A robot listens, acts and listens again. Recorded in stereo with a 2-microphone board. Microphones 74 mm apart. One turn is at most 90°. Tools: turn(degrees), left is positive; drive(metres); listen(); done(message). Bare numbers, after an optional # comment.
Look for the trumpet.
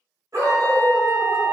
# The trumpet: about 50° right or 130° right.
turn(-50)
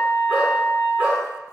# So it is at 70° right.
turn(-70)
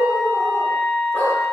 # The trumpet is now 10° right.
turn(-10)
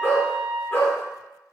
done("Found it: a trumpet, straight ahead.")